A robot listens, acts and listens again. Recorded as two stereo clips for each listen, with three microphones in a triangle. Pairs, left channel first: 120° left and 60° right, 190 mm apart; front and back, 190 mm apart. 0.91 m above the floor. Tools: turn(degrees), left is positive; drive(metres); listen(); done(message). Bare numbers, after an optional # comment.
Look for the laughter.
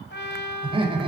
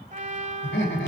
done("Facing the laughter.")